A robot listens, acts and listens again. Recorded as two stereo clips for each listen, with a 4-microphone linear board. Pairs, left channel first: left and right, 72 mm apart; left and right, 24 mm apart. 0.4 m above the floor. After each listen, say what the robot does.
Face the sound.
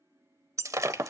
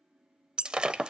Turn 50° right.
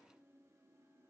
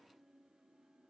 Keep listening.
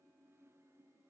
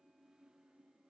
I heard breaking glass, but can't make it out now. It was about straight ahead or 80° right.